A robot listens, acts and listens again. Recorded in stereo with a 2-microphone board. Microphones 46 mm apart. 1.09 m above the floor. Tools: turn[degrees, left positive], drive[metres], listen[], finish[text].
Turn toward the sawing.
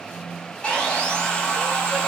Thought: The sawing: about 25° left or 155° left.
Action: turn[25]
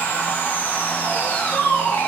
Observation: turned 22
Thought: So it is at 130° left.
Action: turn[130]
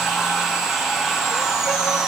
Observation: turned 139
Thought: The sawing is now 10° right.
Action: turn[-10]
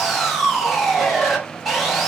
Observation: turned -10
Action: finish[Facing the sawing.]